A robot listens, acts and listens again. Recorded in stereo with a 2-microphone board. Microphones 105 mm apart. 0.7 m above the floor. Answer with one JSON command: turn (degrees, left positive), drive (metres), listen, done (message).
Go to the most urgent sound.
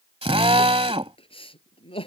{"turn": 65}
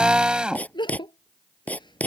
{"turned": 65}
{"turn": 50}
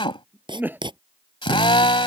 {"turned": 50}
{"turn": -20}
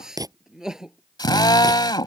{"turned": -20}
{"drive": 1.0}
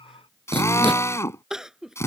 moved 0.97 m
{"drive": 1.0}
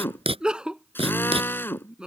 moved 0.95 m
{"turn": -10}
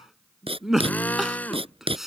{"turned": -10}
{"drive": 1.0}
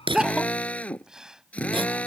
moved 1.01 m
{"drive": 1.0}
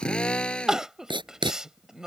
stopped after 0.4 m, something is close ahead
{"done": "I am next to the crying."}